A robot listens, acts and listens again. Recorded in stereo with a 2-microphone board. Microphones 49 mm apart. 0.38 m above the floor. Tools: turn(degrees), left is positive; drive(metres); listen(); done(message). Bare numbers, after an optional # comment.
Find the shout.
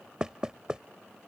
listen()
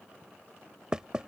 listen()
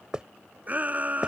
# The shout: about 35° right or 145° right.
turn(-35)
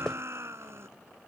# So it is at 110° right.
turn(-110)
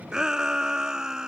# The shout is now 15° right.
turn(-15)
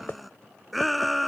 done("Facing the shout.")